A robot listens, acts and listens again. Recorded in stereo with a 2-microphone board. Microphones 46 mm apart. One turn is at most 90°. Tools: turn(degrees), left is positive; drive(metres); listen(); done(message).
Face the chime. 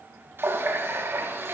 listen()
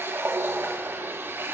listen()
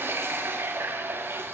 done("I can't make out a chime, only a running tap.")